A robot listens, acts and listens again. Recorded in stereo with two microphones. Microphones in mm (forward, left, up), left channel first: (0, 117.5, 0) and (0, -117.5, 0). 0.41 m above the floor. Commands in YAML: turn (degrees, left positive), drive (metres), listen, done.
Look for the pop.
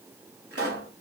turn: -65
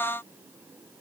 listen: true
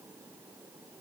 done: "I heard a pop, but can't make it out now. It was about straight ahead or 50° right."